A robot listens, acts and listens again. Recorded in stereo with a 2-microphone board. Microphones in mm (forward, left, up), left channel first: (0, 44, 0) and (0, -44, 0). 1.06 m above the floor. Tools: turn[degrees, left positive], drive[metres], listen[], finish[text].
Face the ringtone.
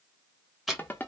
Thought: The ringtone: about 20° left or 160° left.
Action: turn[20]
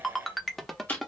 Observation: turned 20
Action: finish[Facing the ringtone.]